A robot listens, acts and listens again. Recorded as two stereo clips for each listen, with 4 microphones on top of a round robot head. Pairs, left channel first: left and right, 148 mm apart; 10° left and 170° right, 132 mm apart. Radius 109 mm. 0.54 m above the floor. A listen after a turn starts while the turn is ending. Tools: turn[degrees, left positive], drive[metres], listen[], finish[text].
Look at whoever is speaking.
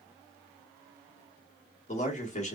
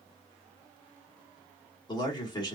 Thought: The man speaking: 60° left.
Action: turn[60]
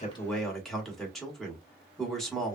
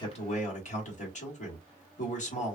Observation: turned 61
Action: finish[Found it: a man speaking, straight ahead, 1 to 2 m away.]